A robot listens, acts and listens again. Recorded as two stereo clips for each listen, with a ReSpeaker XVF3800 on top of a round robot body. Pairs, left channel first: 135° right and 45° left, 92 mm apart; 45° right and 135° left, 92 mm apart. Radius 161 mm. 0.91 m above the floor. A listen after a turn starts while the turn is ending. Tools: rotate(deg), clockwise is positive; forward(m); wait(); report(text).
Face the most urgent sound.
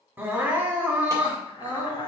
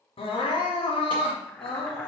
rotate(25)
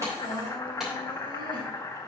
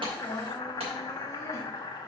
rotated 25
wait()
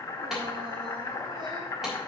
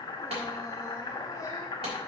wait()
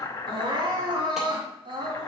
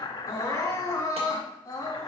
rotate(-10)
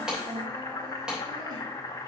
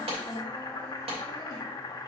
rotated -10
report("Facing the crying, 2 to 4 m away.")